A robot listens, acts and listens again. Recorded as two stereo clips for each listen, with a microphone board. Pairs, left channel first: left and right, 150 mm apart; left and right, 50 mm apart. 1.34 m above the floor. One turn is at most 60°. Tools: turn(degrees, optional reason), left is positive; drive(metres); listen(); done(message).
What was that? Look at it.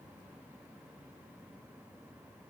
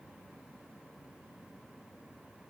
listen()
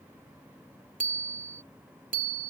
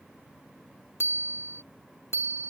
turn(degrees=-60, reason="The bicycle bell: about 65° right or 115° right.")
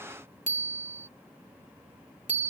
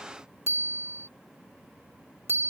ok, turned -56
turn(degrees=-60, reason="So it is at 60° right.")
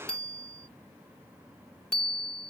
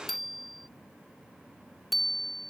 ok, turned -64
done("Facing the bicycle bell.")